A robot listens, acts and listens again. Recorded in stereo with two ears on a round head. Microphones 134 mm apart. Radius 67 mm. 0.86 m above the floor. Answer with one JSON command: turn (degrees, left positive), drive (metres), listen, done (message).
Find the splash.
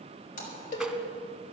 {"turn": 60}
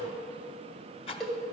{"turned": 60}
{"listen": true}
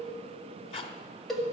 {"done": "I heard a splash, but can't make it out now. It was about straight ahead or 60° left."}